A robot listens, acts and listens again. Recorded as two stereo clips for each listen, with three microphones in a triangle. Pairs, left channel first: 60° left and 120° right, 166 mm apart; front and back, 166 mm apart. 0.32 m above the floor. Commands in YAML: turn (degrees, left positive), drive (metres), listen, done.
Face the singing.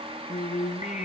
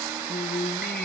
turn: 15
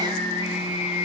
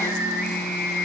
turn: 10
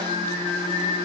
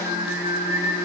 done: "Facing the singing, 2 to 4 m away."